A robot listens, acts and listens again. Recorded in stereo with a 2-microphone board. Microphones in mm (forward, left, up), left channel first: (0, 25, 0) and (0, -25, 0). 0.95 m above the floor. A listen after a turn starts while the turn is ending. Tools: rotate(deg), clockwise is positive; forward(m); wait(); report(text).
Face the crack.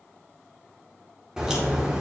rotate(20)
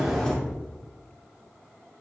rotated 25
report("Facing the crack, 2 to 4 m away.")